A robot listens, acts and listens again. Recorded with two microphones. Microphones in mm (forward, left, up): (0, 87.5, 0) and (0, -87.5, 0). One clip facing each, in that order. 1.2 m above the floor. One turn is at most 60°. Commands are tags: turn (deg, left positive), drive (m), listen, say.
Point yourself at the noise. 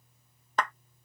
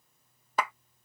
<turn deg="-30"/>
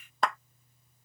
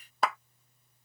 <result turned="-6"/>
<turn deg="30"/>
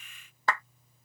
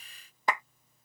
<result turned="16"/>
<turn deg="-15"/>
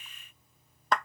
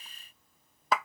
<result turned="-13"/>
<say>Found it: a clap, straight ahead.</say>